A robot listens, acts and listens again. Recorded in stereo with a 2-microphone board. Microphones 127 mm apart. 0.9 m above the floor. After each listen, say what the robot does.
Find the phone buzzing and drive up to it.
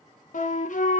Keep listening.
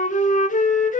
Keep listening.
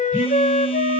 Turn 30° left.
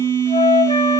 Turn 25° right.
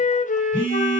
Turn 15° left.
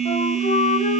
Drive 1.0 m forward.
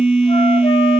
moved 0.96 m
Turn 10° right.
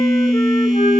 Drive 1.0 m forward.
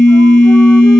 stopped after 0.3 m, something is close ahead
I am next to the phone buzzing.